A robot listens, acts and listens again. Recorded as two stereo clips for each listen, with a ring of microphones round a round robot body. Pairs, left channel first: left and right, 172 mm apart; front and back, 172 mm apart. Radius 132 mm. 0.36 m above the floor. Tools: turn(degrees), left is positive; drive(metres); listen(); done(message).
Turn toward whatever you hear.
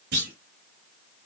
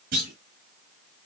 turn(degrees=-130)
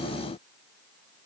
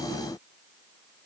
done("I heard a clunk from this way, but can't make it out now.")